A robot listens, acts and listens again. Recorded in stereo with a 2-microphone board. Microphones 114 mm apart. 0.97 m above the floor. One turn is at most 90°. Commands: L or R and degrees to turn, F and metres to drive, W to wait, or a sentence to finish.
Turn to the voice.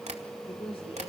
L55
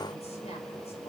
W
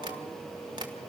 W
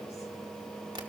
I heard a woman speaking, but can't make it out now. It was about straight ahead or 70° left.